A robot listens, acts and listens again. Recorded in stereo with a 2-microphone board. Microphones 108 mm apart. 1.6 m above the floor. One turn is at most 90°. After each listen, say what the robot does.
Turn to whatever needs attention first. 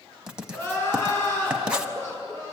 Turn 30° left.
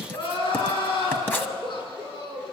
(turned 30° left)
Turn 90° left.
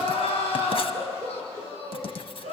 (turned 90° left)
Turn 70° left.
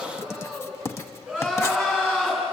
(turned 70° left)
Turn 10° right.
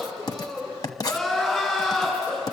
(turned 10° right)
Facing the crying, over 4 m away.